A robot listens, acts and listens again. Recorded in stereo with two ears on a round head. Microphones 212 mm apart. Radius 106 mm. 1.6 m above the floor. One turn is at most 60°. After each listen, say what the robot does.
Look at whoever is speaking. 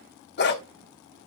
Keep listening.
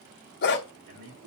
Turn 60° right.
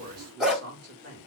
Turn 45° right.
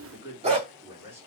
Turn 10° right.
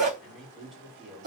Facing the man speaking, over 4 m away.